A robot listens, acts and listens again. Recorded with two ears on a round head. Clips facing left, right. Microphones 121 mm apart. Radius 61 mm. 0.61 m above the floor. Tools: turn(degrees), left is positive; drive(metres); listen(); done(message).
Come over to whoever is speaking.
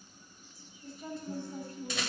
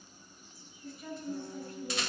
turn(degrees=30)
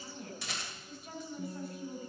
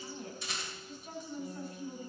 drive(metres=1.0)
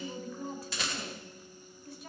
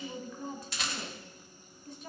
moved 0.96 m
drive(metres=1.0)
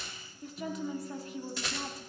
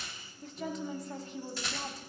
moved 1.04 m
drive(metres=1.0)
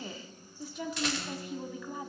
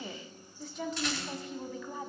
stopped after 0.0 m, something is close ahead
turn(degrees=10)
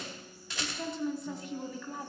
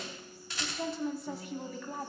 done("Arrived at the woman speaking, straight ahead.")